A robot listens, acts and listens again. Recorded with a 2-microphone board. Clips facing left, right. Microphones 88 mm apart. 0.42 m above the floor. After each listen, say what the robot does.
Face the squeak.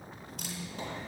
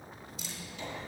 Turn 40° left.
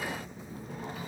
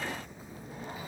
Turn 95° left.
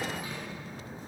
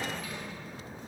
Turn 30° left.
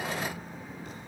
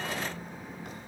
Facing the squeak, 2 to 4 m away.